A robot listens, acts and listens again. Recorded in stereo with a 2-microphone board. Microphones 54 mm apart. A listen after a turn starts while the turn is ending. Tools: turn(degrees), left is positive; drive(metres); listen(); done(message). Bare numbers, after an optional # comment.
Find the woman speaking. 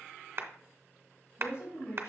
# The woman speaking: about 70° left or 110° left.
turn(70)
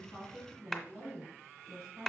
# So it is at 10° left.
turn(10)
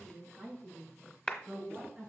done("Found it: a woman speaking, straight ahead.")